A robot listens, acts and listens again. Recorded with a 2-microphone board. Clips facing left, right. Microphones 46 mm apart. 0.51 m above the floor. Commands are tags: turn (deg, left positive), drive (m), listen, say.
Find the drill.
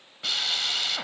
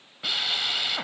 <turn deg="-30"/>
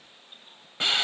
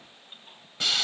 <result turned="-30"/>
<turn deg="25"/>
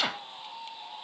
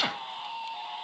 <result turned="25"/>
<say>Facing the drill.</say>